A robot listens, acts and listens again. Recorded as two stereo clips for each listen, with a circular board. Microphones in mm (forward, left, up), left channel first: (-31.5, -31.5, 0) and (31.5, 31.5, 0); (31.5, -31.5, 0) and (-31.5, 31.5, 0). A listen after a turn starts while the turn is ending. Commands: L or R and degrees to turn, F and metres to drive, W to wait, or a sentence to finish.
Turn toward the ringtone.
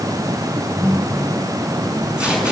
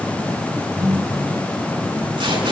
L90
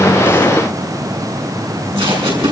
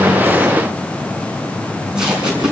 W
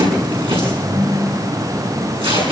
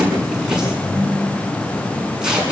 L20
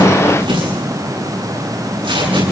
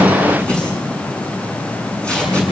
W
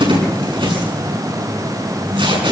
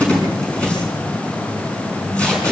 Facing the ringtone, over 4 m away.